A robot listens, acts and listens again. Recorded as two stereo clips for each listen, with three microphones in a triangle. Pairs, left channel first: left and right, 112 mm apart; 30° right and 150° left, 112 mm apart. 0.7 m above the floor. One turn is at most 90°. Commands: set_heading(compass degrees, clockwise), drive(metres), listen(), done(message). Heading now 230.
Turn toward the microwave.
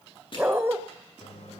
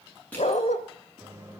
set_heading(145)
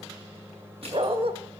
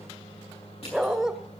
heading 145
set_heading(165)
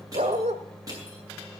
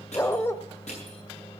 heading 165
done("Facing the microwave.")